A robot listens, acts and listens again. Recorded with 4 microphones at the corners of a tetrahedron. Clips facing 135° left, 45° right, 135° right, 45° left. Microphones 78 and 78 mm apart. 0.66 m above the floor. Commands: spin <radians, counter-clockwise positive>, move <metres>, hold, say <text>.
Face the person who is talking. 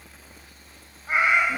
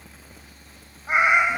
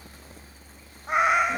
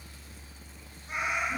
hold
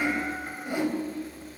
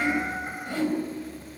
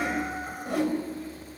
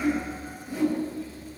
hold
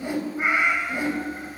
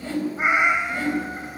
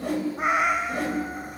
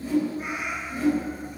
say I can't make out anyone speaking to turn to.